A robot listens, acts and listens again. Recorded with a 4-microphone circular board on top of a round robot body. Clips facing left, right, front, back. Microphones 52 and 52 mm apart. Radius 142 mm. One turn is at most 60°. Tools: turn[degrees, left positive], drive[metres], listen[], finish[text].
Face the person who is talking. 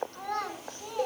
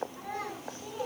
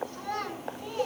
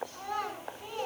Thought: The child speaking: 100° left.
Action: turn[60]
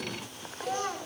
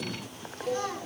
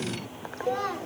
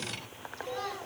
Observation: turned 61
Thought: The child speaking is now 40° left.
Action: turn[40]
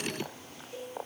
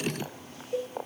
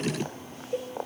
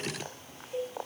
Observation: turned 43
Action: listen[]
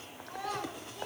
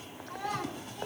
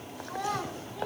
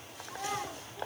Action: finish[Facing the child speaking.]